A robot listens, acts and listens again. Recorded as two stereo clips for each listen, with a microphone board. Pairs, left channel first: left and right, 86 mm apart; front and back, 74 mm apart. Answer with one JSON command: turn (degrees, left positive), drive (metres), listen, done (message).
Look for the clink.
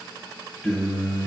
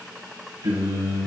{"listen": true}
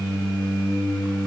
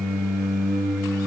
{"listen": true}
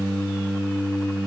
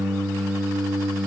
{"done": "I can't make out a clink, only singing."}